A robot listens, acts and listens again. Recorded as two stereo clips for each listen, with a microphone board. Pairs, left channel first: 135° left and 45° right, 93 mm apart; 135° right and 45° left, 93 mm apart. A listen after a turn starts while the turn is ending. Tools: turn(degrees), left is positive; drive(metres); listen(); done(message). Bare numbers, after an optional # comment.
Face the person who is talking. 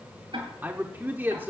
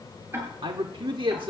# The man speaking: 25° left.
turn(25)
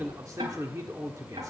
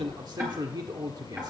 done("Found it: a man speaking, straight ahead.")